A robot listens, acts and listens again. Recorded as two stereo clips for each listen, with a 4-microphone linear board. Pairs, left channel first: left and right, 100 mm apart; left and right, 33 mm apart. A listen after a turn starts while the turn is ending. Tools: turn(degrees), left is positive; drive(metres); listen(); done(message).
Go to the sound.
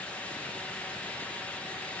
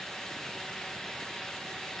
listen()
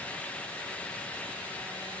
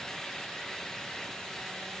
listen()
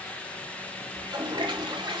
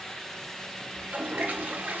turn(degrees=-55)
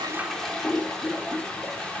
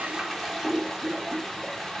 drive(metres=1.0)
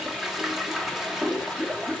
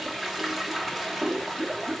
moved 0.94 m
drive(metres=1.0)
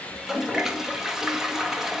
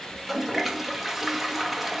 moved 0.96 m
drive(metres=1.0)
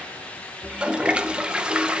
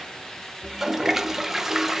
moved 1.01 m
turn(degrees=-10)
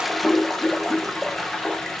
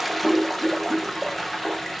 drive(metres=1.0)
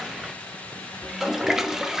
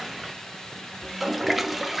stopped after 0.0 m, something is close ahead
done("I am next to the toilet flushing.")